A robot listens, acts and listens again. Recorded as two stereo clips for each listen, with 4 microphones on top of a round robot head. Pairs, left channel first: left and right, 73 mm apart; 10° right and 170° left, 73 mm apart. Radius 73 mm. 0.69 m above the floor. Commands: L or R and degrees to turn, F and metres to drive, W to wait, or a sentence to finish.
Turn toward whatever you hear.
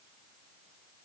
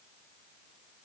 W
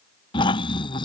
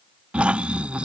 L95
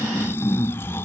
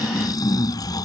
L25
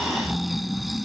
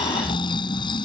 Facing the snoring.